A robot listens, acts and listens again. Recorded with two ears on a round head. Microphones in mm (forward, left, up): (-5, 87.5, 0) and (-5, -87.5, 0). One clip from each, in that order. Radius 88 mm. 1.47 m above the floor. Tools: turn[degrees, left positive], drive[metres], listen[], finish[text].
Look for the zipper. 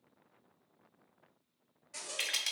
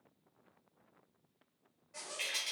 Action: turn[90]
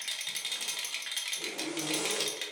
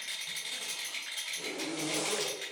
Action: finish[Found it: a zipper, straight ahead.]